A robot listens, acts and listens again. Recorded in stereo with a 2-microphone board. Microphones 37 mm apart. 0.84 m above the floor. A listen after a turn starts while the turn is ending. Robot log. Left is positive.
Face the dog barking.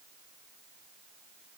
cmd idle
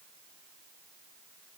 cmd idle
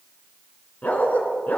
note: The dog barking: about 45° left or 135° left.
cmd yaw +45
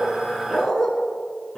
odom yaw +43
note: So it is at 15° left.
cmd yaw +15
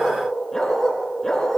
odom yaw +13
end: Facing the dog barking.